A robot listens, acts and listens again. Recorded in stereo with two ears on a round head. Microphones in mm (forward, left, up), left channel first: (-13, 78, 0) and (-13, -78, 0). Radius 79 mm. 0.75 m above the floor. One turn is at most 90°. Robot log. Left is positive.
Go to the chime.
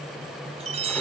note: The chime: about 35° right or 145° right.
cmd yaw -35
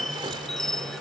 cmd fwd 1.0
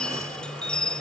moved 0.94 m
cmd fwd 1.0
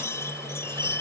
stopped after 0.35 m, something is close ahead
note: The chime is now 15° left.
cmd yaw +15
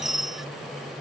end: Something is in my way. I am facing the chime but have not reached it.